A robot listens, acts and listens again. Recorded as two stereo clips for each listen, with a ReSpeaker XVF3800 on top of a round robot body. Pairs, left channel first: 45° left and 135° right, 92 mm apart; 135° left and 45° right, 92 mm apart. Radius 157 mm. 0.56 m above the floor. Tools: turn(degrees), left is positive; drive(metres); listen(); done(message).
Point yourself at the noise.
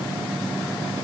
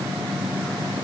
listen()
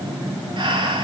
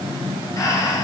turn(degrees=-175)
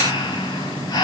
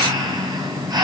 done("Found it: breathing, straight ahead.")